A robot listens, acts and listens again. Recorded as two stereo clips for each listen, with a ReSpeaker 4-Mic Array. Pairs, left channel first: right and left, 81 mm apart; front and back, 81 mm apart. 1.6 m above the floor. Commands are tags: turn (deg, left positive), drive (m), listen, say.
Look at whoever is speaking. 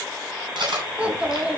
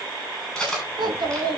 <turn deg="165"/>
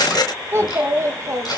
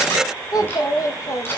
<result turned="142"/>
<turn deg="45"/>
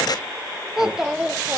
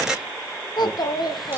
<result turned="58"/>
<turn deg="15"/>
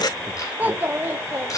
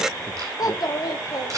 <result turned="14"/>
<turn deg="35"/>
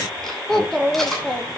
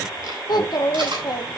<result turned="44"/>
<turn deg="-10"/>
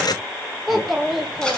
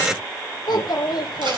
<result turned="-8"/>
<say>Facing the child speaking, 1 to 2 m away.</say>